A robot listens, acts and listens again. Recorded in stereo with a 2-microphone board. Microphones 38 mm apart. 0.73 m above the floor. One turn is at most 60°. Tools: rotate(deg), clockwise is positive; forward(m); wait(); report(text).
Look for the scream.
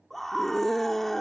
rotate(-30)
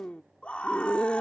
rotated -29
rotate(-60)
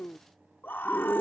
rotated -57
rotate(-60)
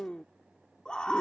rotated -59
rotate(-30)
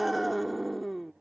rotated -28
report("Facing the scream.")